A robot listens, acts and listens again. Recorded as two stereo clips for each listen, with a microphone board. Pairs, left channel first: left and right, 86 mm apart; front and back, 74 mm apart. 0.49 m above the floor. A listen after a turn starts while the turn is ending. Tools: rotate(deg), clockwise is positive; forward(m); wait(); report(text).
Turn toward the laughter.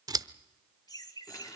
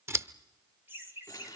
rotate(-125)
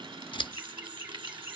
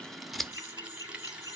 rotate(25)
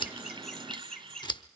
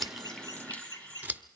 rotate(-10)
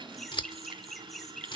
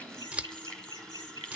report("Facing the laughter, 2 to 4 m away.")